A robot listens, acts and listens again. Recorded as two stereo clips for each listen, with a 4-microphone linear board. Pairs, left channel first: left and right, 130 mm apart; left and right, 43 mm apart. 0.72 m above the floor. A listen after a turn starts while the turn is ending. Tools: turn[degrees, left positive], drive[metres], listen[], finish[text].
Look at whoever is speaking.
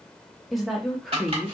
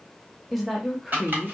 Action: turn[30]
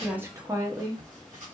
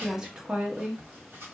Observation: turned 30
Thought: So it is at 30° right.
Action: turn[-30]
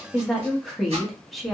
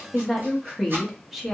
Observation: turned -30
Action: finish[Found it: a woman speaking, straight ahead, under 1 m away.]